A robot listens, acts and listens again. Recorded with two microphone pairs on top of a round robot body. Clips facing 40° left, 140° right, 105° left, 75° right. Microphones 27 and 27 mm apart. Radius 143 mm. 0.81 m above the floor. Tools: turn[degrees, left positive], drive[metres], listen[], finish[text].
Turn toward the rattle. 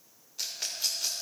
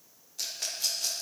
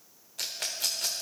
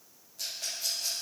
Thought: The rattle: 120° left.
Action: turn[120]
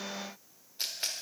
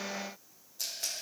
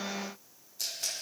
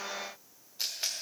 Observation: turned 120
Thought: The rattle is now 10° right.
Action: turn[-10]
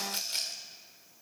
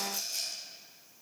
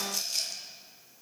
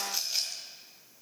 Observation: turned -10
Action: finish[Found it: a rattle, straight ahead.]